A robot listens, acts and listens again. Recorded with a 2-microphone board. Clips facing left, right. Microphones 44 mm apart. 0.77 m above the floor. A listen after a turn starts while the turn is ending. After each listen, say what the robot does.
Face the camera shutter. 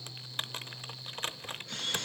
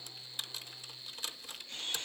Turn 90° left.
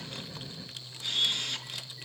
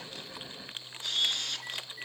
Found it: a camera shutter, straight ahead, over 4 m away.